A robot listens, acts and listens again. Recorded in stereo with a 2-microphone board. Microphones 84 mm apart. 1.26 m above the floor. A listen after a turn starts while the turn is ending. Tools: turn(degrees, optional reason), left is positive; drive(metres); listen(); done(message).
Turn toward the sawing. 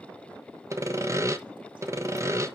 turn(degrees=-35, reason="The sawing: about 35° right or 145° right.")
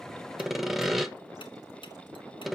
done("Found it: sawing, straight ahead, 1 to 2 m away.")